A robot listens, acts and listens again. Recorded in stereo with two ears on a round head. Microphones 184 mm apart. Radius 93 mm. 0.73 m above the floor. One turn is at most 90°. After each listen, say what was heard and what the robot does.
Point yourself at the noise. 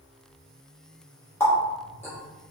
Turn 30° left.
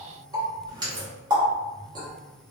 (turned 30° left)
So it is at 20° right. Turn 20° right.
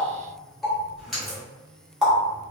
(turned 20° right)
Found it: a running tap, straight ahead.